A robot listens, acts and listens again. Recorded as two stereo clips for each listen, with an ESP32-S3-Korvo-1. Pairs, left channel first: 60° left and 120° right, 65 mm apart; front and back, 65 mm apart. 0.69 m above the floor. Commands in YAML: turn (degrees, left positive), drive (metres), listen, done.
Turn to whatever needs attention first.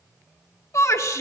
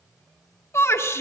turn: 35
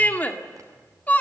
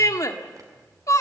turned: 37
done: "Facing the shout, 2 to 4 m away."